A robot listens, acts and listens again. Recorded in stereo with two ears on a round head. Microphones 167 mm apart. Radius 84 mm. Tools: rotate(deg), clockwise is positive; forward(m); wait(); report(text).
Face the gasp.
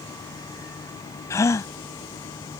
rotate(-15)
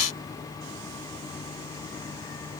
wait()
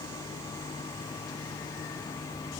report("I heard a gasp, but can't make it out now. It was about straight ahead or 150° left.")